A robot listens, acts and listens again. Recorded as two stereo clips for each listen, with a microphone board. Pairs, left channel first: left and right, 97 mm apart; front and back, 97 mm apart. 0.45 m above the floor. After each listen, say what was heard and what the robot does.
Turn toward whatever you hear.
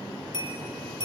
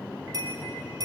The bell: 125° left. Turn 125° left.
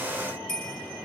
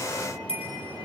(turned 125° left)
Facing the bell.